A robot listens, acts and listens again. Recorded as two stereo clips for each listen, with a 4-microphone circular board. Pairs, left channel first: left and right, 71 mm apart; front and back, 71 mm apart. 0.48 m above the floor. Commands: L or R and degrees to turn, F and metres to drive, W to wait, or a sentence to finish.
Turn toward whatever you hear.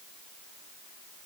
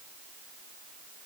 W
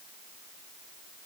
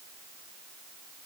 W
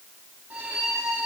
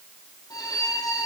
R25
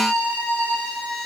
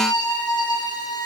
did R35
L10
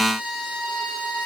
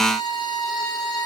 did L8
Found it: a violin, straight ahead, over 4 m away.